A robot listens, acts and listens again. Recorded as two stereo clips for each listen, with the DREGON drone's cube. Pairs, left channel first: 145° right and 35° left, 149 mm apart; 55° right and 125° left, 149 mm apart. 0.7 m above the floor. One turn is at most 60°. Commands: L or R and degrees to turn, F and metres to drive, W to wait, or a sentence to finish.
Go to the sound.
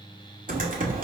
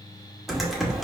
L35
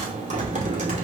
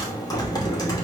F1.0
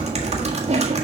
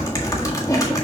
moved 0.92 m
F1.0
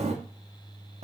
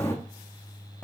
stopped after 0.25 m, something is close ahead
L15
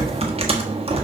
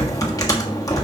I am next to the typing on a keyboard.